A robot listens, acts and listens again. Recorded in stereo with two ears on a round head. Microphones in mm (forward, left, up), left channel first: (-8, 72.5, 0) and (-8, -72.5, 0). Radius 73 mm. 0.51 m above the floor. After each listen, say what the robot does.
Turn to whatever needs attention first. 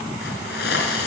Keep listening.
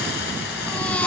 Turn 30° left.
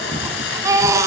Turn 20° right.
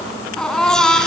Found it: a baby crying, straight ahead, 2 to 4 m away.